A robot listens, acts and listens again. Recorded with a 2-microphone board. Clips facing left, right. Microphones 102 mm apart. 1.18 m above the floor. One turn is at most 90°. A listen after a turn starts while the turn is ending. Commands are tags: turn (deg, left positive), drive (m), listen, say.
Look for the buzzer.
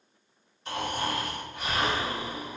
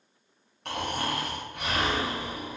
<listen/>
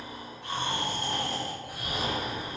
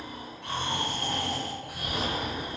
<listen/>
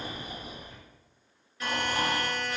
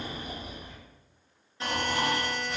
<turn deg="-25"/>
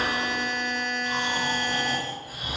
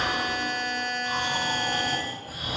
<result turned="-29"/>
<say>Found it: a buzzer, straight ahead, 1 to 2 m away.</say>